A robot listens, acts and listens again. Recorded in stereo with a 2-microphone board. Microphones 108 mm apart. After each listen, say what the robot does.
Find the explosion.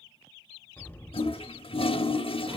Turn 15° left.
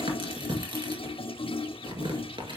Keep listening.
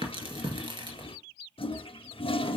I heard an explosion, but can't make it out now. It was about straight ahead or 150° left.